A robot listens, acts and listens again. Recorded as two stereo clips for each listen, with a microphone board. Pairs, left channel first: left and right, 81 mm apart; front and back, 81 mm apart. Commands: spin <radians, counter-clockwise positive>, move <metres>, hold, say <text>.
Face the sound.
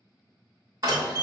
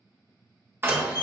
spin -2.18
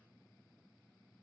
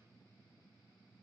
say I heard a door slam from this way, but can't make it out now.